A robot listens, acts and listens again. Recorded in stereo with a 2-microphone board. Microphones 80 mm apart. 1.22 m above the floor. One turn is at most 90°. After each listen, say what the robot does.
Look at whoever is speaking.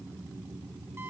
Keep listening.
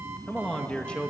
Turn 30° left.
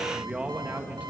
Turn 15° right.
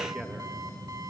Keep listening.
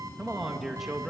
Facing the man speaking, 1 to 2 m away.